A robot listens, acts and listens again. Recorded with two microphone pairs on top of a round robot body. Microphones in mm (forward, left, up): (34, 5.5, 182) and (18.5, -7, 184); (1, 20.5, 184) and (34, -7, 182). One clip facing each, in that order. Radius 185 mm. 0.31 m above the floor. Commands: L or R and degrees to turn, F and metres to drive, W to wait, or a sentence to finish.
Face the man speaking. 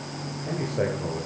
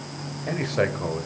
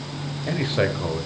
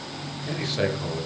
R150
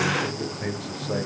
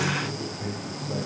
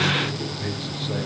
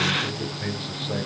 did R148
L30
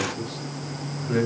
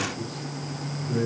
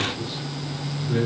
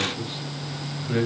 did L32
L15
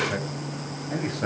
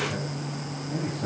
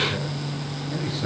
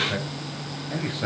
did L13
L15
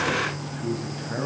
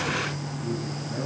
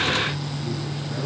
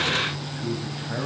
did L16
Facing the man speaking.